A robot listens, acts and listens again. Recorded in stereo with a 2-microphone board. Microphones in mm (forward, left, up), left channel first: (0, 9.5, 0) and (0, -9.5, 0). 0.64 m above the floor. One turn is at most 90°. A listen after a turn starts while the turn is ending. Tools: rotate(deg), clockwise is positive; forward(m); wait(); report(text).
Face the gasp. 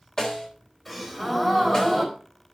rotate(-30)
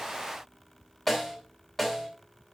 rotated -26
wait()
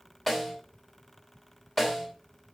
report("I heard a gasp, but can't make it out now. It was about 15° right or 145° left.")